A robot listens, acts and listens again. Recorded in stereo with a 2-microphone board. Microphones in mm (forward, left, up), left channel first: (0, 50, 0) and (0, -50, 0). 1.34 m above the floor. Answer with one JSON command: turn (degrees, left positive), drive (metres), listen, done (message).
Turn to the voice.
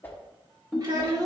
{"turn": -40}
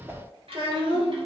{"turn": -110}
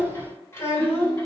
{"turn": 25}
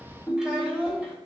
{"turn": -15}
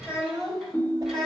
{"done": "Found it: a child speaking, straight ahead."}